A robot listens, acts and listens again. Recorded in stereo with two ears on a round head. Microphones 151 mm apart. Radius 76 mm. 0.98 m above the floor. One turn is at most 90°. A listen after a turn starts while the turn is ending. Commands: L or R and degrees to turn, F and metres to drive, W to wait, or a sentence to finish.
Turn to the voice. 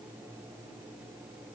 W
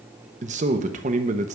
R45
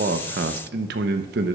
R85
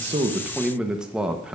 Found it: a man speaking, straight ahead.